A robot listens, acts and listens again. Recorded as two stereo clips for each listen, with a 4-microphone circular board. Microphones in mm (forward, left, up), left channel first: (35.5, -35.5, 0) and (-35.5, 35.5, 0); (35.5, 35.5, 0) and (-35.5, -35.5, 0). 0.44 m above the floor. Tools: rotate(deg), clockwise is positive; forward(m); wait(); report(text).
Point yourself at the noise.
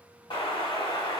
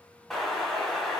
rotate(45)
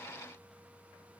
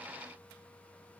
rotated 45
report("Facing where the explosion came from. I can't hear it now.")